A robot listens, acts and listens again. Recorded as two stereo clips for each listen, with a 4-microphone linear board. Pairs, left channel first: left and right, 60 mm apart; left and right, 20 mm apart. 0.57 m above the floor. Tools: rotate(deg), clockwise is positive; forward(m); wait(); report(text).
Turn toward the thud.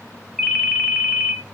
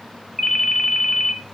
wait()
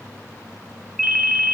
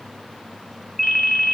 wait()
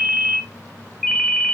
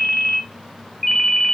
report("I can't make out a thud to turn to.")